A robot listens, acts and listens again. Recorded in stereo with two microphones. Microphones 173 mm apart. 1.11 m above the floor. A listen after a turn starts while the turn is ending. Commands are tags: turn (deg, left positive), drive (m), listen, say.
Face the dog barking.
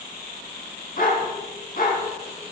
<turn deg="55"/>
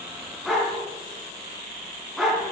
<say>Found it: a dog barking, straight ahead, 2 to 4 m away.</say>